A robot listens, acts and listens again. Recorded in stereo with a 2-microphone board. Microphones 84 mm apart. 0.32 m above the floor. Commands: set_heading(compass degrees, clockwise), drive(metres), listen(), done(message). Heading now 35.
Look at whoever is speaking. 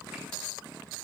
listen()
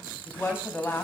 set_heading(10)
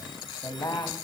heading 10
set_heading(245)
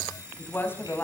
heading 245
set_heading(215)
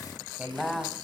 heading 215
done("Found it: a woman speaking, straight ahead.")